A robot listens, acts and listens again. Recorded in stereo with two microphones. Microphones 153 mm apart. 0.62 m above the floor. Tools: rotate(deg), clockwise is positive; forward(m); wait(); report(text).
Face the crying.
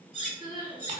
rotate(30)
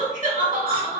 rotate(115)
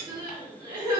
rotate(30)
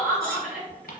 report("Facing the crying.")